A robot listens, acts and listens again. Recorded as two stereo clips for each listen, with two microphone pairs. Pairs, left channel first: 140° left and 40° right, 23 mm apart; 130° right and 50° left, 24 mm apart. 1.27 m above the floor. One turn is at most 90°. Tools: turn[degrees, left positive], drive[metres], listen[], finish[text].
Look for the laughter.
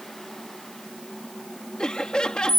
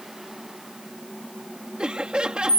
Thought: The laughter: 90° left.
Action: turn[90]
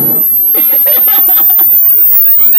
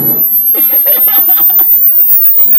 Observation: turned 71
Thought: Nothing new. It was at 20° left.
Action: turn[20]
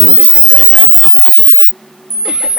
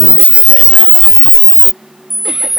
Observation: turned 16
Action: listen[]
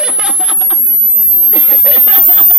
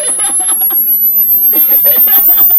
Action: finish[Facing where the laughter came from. I can't hear it now.]